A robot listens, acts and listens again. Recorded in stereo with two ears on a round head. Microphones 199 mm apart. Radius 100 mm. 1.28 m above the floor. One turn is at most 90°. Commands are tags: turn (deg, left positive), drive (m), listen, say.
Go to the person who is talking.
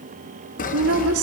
<turn deg="-75"/>
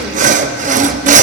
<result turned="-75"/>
<listen/>
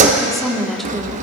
<drive m="1.0"/>
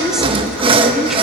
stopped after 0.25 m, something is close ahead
<say>Something is in my way. I am facing the woman speaking but have not reached it.</say>